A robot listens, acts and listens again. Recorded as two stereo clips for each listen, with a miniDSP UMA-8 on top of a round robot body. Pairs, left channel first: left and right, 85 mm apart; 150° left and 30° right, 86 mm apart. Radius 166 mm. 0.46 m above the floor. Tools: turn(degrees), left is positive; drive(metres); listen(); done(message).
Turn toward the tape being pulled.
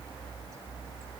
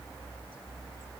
listen()
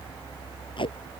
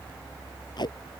turn(degrees=115)
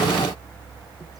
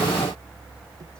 listen()
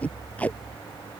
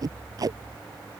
turn(degrees=15)
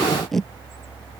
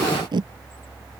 done("Facing the tape being pulled.")